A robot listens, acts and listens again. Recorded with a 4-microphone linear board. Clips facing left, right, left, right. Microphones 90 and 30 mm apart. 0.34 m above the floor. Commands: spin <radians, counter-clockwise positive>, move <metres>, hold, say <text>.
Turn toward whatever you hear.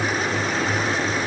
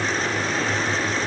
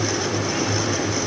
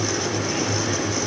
hold
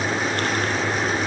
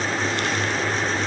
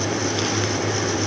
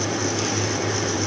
hold
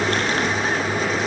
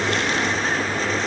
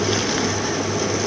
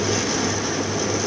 say I can't make out anything.